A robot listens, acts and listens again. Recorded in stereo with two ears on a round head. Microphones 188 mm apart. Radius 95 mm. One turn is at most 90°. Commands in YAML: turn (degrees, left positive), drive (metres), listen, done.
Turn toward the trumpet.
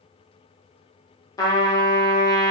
turn: 20
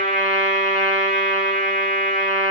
done: "Facing the trumpet, 1 to 2 m away."